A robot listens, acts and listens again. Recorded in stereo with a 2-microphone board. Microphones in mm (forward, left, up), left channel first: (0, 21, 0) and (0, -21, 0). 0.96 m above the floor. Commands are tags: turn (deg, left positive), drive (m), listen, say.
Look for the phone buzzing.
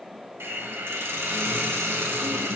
<listen/>
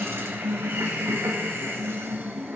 <listen/>
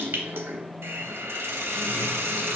<say>I can't make out a phone buzzing, only a hiss.</say>